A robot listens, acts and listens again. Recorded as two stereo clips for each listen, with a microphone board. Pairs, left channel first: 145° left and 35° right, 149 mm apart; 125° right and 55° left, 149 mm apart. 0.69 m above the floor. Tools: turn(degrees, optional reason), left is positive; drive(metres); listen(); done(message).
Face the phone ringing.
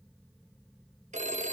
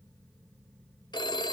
turn(degrees=-65, reason="The phone ringing: 65° right.")
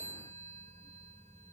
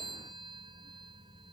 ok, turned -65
done("Found it: a phone ringing, straight ahead.")